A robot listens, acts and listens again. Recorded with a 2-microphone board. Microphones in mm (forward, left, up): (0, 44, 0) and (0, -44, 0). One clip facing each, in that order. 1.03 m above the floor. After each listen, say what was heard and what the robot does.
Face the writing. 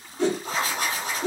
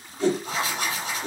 The writing: about 45° left or 135° left. Turn 45° left.
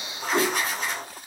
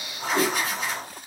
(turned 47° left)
Found it: writing, straight ahead.